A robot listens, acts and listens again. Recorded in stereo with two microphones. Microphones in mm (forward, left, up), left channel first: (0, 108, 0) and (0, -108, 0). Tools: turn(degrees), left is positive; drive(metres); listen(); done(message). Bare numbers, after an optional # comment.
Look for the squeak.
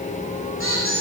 # The squeak: about 75° left or 105° left.
turn(75)
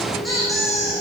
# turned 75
done("Facing the squeak, over 4 m away.")